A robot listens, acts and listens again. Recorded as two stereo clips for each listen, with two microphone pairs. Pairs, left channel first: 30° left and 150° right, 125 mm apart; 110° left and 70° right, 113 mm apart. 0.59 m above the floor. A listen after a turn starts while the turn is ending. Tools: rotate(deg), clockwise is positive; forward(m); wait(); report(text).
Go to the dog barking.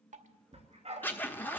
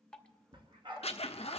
rotate(115)
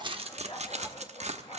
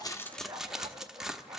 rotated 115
rotate(10)
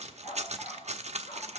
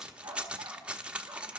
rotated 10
forward(1.0)
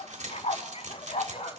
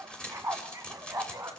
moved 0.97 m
forward(1.0)
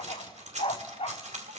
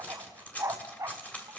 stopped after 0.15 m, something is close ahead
rotate(10)
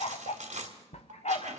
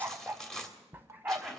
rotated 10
report("I am next to the dog barking.")